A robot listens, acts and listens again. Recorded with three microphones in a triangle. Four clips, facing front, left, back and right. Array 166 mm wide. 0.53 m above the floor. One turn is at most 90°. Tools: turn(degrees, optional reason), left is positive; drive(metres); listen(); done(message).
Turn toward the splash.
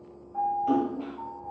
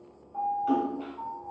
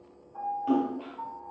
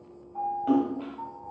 turn(degrees=-90, reason="The splash: 100° right.")
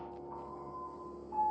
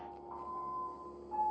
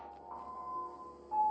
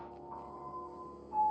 turn(degrees=-10, reason="Nothing new. It was at 10° right.")
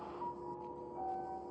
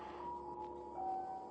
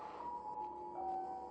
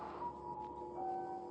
done("I heard a splash from this way, but can't make it out now.")